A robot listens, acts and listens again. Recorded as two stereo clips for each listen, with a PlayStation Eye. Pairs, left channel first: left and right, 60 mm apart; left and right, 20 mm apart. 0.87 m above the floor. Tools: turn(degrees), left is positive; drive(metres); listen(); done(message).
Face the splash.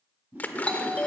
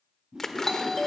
turn(degrees=30)
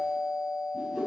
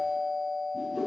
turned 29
listen()
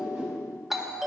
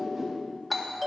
done("I heard a splash, but can't make it out now. It was about straight ahead or 125° left.")